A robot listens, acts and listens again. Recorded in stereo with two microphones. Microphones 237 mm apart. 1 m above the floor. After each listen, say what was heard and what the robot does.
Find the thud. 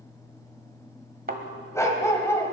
The thud: about 40° right or 140° right. Turn 40° right.
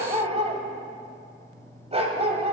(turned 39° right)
Keep listening.
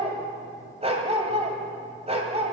I heard a thud, but can't make it out now. It was about straight ahead or 100° right.